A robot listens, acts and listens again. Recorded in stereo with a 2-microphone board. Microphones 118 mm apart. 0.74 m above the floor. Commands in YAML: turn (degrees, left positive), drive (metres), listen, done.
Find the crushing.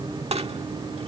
turn: -60
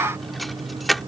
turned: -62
done: "Found it: crushing, straight ahead."